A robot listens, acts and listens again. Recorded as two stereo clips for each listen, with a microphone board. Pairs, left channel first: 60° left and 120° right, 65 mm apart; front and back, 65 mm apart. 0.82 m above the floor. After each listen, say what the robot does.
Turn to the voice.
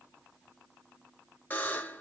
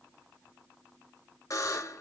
Keep listening.
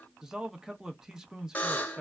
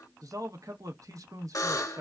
Turn 160° left.
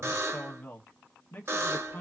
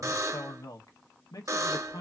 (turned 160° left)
Found it: a man speaking, straight ahead, under 1 m away.